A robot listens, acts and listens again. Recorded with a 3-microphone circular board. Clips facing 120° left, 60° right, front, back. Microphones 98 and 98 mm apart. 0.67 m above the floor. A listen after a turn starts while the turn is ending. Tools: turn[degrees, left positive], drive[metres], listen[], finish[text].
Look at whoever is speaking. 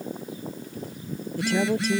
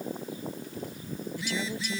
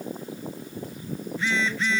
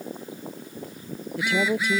Thought: The woman speaking: 165° left.
Action: turn[165]
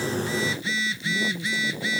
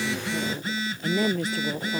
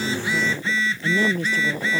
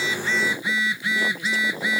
Thought: The woman speaking is now 45° right.
Action: turn[-45]
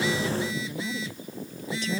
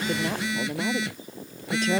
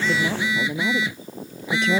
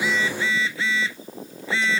Thought: The woman speaking is now 20° right.
Action: turn[-20]
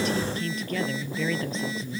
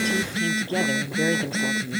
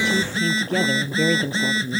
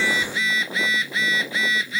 Action: finish[Facing the woman speaking.]